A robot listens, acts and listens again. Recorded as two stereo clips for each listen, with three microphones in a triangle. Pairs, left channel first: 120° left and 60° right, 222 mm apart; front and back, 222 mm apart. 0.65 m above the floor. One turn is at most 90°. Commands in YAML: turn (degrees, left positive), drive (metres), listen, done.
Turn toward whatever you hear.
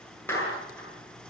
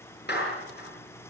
turn: 40
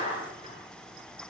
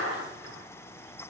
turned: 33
done: "Facing the clap, over 4 m away."